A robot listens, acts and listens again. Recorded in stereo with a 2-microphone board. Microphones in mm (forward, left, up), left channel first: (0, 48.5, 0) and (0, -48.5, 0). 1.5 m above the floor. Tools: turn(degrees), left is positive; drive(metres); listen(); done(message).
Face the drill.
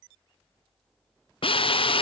turn(degrees=70)
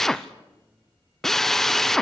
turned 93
done("Facing the drill.")